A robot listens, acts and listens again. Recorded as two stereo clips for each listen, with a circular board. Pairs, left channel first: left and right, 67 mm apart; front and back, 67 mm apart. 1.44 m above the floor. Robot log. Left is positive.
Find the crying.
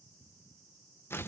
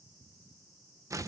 cmd idle
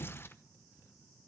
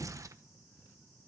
cmd idle
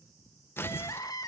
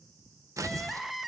note: The crying: 95° left.
cmd yaw +95
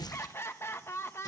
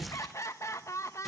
note: The crying is now 40° left.
cmd yaw +40
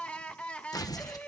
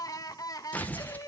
note: The crying is now 15° left.
cmd yaw +15
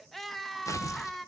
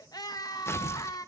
end: Facing the crying, 1 to 2 m away.